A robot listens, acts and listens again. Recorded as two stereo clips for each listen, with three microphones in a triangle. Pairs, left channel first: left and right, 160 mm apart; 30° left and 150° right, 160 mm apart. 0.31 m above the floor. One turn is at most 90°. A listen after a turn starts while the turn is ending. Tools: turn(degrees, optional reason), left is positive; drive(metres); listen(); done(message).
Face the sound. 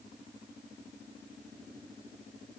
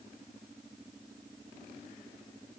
listen()
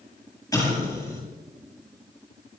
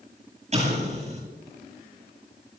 turn(degrees=90, reason="The explosion: 160° left.")
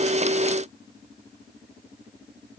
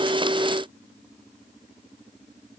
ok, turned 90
turn(degrees=70, reason="Nothing new. It was at 70° left.")
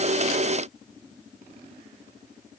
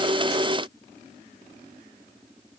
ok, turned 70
done("I heard an explosion from this way, but can't make it out now.")